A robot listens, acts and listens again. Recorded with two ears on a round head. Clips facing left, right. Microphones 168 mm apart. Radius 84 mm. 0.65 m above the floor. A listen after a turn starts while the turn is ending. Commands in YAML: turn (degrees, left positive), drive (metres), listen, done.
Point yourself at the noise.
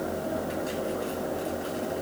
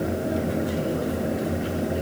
listen: true
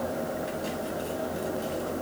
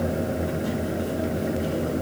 listen: true
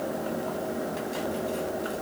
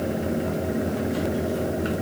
done: "I can't make out anything to turn to."